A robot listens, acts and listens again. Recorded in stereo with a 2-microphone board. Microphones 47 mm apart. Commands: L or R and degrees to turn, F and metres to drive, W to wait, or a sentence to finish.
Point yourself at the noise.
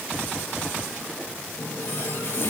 L65
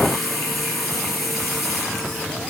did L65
Found it: a running tap, straight ahead.